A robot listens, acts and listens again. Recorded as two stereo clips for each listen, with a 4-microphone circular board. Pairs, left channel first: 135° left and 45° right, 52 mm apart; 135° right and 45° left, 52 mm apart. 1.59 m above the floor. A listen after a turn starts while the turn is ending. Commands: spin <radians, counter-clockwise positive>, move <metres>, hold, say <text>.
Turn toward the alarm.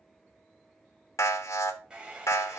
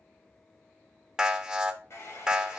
spin 2.09
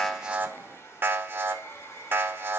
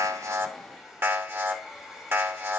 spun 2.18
say Facing the alarm.